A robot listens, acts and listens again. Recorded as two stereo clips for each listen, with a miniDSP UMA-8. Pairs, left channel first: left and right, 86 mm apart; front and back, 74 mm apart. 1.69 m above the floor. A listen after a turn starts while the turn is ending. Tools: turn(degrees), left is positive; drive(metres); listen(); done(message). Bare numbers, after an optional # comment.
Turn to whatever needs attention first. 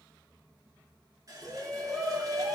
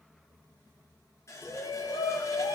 done("Facing the shout.")